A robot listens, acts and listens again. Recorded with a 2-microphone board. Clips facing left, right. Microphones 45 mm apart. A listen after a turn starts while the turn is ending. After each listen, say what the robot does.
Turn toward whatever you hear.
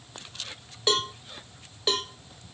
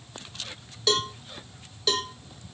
Turn 20° left.
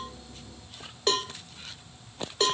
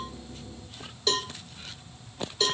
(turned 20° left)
Turn 135° left.
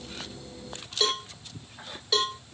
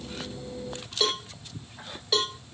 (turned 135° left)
Found it: a cowbell, straight ahead, under 1 m away.